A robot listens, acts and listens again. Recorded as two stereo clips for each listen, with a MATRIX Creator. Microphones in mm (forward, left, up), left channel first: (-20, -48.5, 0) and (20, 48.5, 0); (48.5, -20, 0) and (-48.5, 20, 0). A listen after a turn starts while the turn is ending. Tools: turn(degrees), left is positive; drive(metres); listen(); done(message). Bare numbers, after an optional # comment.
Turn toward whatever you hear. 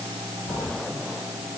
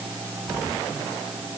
# The cat meowing: 120° right.
turn(-120)
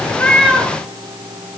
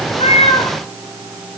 # The cat meowing is now 15° right.
turn(-15)
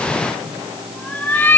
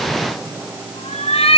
# The cat meowing is now 45° right.
turn(-45)
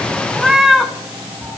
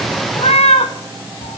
# The cat meowing is now 25° right.
turn(-25)
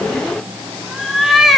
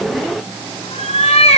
# The cat meowing is now 20° right.
turn(-20)
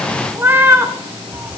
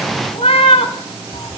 done("Found it: a cat meowing, straight ahead, 1 to 2 m away.")